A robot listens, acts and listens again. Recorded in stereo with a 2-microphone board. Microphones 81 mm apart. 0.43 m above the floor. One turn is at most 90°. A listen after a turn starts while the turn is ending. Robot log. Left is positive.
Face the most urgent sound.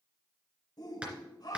note: The shout: about 55° left or 125° left.
cmd yaw +55
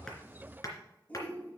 note: So it is at 25° left.
cmd yaw +25
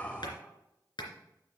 cmd idle
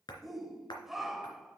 end: Facing the shout.